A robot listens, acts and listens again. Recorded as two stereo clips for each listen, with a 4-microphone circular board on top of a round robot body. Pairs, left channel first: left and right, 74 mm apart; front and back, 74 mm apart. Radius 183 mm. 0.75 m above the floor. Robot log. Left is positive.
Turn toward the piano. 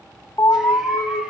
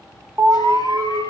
cmd idle
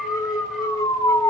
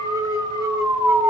cmd idle
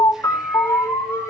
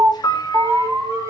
note: The piano: 40° left.
cmd yaw +40
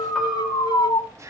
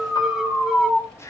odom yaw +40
end: Found it: a piano, straight ahead.